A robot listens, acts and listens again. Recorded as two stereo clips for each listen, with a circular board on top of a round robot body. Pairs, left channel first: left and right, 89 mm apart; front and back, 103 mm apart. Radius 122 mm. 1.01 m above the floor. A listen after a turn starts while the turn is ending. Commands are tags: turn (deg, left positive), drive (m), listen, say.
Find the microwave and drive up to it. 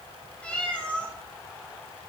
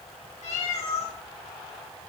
<listen/>
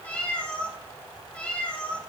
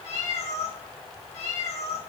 <listen/>
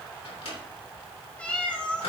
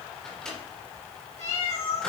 <turn deg="85"/>
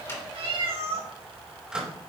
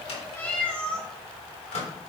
<turn deg="-10"/>
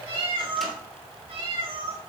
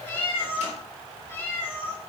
<listen/>
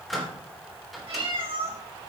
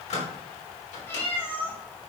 <drive m="1.0"/>
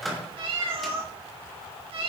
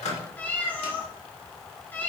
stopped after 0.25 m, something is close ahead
<say>Something is in my way. I am facing the microwave but have not reached it.</say>